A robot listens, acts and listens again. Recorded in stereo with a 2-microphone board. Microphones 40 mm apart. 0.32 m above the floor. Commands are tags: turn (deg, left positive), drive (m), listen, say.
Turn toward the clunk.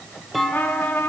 <turn deg="30"/>
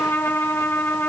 <listen/>
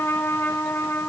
<say>I heard a clunk, but can't make it out now. It was about 30° right or 150° left.</say>